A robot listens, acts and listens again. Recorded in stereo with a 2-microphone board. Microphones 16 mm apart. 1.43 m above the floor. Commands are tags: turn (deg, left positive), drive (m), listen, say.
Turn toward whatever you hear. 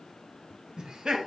<turn deg="-90"/>
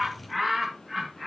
<say>Facing the laughter.</say>